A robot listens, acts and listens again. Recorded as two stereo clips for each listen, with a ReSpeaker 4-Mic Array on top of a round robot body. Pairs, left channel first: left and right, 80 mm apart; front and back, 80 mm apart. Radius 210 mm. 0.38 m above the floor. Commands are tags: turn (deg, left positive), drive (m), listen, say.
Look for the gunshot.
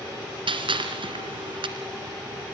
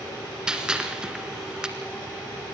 <turn deg="-100"/>
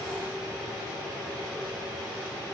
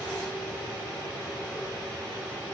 <say>Facing where the gunshot came from. I can't hear it now.</say>